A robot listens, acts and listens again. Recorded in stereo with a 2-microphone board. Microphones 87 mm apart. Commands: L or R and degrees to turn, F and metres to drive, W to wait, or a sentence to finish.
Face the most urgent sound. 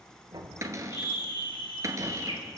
L70
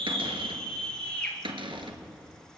L10
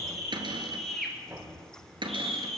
Facing the scream.